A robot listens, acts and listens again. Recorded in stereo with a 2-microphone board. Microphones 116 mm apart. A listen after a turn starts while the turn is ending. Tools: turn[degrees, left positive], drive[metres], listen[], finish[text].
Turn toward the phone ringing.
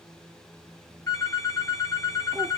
Thought: The phone ringing: about 25° left or 155° left.
Action: turn[25]
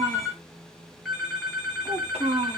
Action: finish[Found it: a phone ringing, straight ahead, 1 to 2 m away.]